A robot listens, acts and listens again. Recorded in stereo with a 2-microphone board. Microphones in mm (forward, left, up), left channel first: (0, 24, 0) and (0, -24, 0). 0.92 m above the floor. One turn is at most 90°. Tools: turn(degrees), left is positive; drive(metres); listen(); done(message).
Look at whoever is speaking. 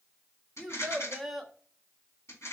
turn(degrees=30)
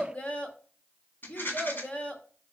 turn(degrees=90)
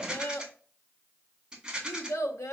turn(degrees=90)
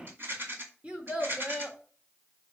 turn(degrees=-25)
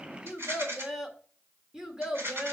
turn(degrees=-15)
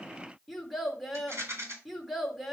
done("Found it: a child speaking, straight ahead, 1 to 2 m away.")